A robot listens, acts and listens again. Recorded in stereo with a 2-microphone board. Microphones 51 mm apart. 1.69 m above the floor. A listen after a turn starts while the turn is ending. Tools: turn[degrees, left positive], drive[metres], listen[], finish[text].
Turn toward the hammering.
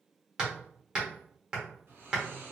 Thought: The hammering: about 15° right or 165° right.
Action: turn[-15]
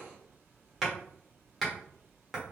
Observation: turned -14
Action: finish[Found it: hammering, straight ahead, 1 to 2 m away.]